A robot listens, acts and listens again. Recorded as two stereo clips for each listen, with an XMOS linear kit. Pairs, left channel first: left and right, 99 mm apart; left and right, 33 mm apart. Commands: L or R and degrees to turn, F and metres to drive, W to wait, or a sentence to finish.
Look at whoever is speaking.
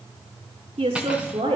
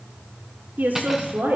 R90
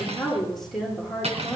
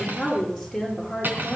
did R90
Facing the woman speaking, over 4 m away.